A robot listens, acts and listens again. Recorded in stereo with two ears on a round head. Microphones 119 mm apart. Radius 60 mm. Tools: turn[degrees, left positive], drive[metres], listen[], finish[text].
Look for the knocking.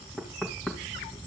Action: turn[30]
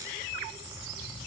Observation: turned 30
Action: listen[]
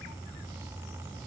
Action: listen[]
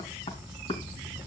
Thought: So it is at 145° left.
Action: turn[145]
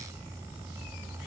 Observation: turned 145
Action: listen[]
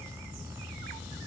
Action: listen[]
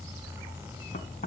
Thought: The knocking is now 55° left.
Action: turn[55]
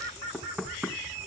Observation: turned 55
Action: finish[Found it: knocking, straight ahead.]